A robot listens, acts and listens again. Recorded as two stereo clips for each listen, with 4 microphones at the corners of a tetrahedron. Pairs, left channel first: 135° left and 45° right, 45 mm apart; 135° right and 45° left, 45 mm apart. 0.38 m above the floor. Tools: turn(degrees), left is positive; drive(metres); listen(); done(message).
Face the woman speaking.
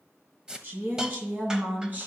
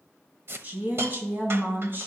done("Found it: a woman speaking, straight ahead.")